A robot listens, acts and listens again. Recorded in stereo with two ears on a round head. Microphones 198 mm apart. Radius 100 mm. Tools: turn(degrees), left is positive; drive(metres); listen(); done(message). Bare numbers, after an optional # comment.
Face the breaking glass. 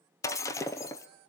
turn(30)
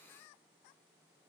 listen()
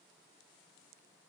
done("I heard breaking glass, but can't make it out now. It was about 15° right or 135° left.")